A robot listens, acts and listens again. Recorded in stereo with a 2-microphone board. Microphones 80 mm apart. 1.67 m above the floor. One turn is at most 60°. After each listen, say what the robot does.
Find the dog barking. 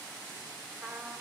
Keep listening.
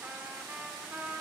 Keep listening.
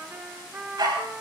Turn 60° right.
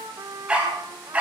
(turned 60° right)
Turn 15° right.
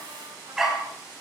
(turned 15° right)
Found it: a dog barking, straight ahead.